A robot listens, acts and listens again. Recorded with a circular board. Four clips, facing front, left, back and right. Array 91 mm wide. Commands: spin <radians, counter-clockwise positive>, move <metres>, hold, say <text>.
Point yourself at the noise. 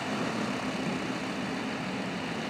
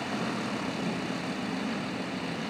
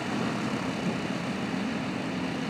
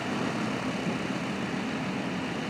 hold
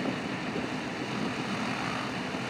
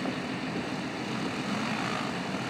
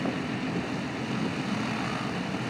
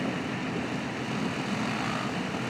hold
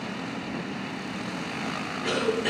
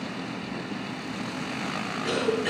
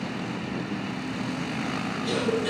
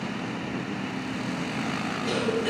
spin 0.17
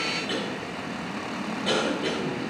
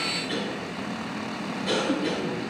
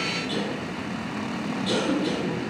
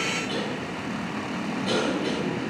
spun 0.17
say Found it: a cough, straight ahead, 2 to 4 m away.